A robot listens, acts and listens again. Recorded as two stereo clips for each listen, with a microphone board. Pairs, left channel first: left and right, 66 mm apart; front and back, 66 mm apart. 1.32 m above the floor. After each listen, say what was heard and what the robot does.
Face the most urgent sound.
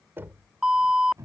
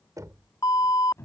The alarm: 10° right. Turn 10° right.
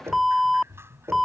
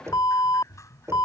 Found it: an alarm, straight ahead.